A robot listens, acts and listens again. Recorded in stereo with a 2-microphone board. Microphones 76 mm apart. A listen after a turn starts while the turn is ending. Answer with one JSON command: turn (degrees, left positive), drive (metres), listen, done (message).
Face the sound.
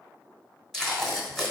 {"turn": 30}
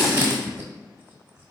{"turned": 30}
{"turn": -25}
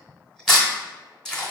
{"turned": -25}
{"done": "Found it: tape being pulled, straight ahead."}